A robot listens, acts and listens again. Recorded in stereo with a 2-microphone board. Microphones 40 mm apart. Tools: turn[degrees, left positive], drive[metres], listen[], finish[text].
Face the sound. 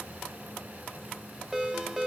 Thought: The ringtone: about 15° right or 165° right.
Action: turn[-15]
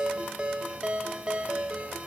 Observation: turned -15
Thought: So it is at 150° right.
Action: turn[-150]
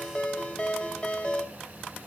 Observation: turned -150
Thought: The ringtone is now 35° left.
Action: turn[35]
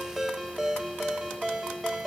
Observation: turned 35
Action: finish[Facing the ringtone.]